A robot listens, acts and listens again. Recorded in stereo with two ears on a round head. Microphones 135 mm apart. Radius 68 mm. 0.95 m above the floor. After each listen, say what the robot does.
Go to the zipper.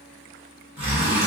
Turn 30° right.
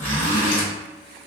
Turn 20° left.
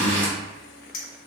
Turn 10° left.
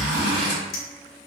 Drive 1.0 m forward.
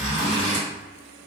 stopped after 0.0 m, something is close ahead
Something is in my way. I am facing the zipper but have not reached it.